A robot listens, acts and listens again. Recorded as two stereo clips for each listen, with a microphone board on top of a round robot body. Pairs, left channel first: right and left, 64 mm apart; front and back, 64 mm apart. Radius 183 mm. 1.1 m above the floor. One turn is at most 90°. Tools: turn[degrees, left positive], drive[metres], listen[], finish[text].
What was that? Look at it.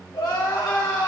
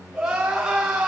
Thought: The crying: 100° right.
Action: turn[-90]
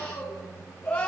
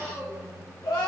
Thought: The crying is now 20° right.
Action: turn[-20]
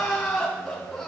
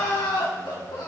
Action: finish[Facing the crying, 2 to 4 m away.]